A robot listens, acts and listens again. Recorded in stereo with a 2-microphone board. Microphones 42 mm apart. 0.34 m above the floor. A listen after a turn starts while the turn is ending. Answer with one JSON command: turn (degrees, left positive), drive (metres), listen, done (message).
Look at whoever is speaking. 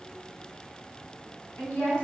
{"turn": 60}
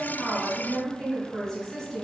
{"turn": 15}
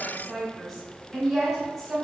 {"done": "Facing the woman speaking, 1 to 2 m away."}